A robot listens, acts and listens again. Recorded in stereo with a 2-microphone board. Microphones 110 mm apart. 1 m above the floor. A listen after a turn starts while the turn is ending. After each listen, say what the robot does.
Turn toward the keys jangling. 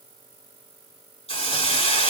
Keep listening.
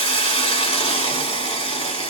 Keep listening.
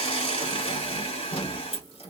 Turn 90° left.
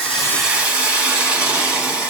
Keep listening.
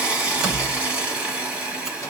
Facing the keys jangling.